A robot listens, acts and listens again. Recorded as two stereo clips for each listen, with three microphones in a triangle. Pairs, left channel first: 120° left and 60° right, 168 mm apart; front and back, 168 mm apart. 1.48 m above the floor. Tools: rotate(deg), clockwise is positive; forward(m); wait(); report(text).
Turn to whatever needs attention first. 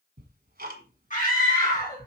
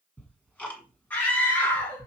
rotate(-80)
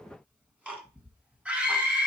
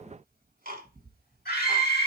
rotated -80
rotate(-25)
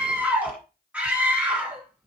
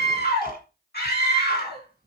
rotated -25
rotate(-25)
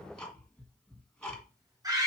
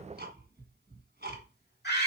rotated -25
rotate(-10)
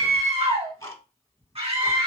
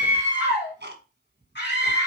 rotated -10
report("Facing the scream, 2 to 4 m away.")